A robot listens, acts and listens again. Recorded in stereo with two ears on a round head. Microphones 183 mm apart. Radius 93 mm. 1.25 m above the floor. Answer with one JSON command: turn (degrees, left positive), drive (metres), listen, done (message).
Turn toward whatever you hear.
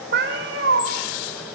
{"turn": -65}
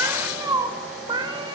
{"turn": -25}
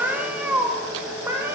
{"turn": -15}
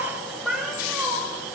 {"done": "Facing the cat meowing, 2 to 4 m away."}